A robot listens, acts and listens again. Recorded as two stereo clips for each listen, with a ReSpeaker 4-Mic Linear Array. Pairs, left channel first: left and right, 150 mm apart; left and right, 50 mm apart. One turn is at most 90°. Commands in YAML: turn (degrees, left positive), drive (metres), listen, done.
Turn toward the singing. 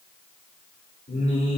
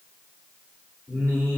turn: 50
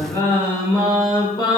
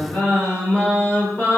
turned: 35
turn: 30
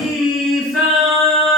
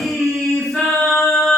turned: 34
done: "Facing the singing, 2 to 4 m away."